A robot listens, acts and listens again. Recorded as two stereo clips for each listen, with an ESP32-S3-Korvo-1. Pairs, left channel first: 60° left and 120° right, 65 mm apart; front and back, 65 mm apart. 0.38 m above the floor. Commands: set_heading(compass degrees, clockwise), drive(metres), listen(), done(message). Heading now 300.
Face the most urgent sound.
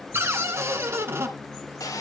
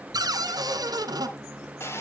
listen()
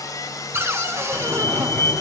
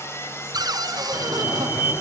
set_heading(290)
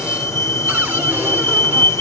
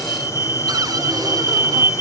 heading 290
done("Facing the fire alarm, over 4 m away.")